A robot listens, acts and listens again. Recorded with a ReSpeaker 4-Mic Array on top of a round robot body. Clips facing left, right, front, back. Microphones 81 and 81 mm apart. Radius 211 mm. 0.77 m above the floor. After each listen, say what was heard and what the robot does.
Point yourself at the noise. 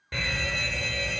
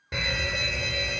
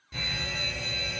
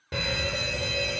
The fire alarm: 170° right. Turn 170° right.
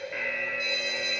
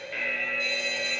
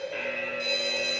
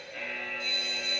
The fire alarm is now 10° left. Turn 10° left.
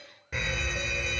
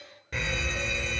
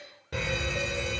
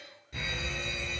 Found it: a fire alarm, straight ahead, over 4 m away.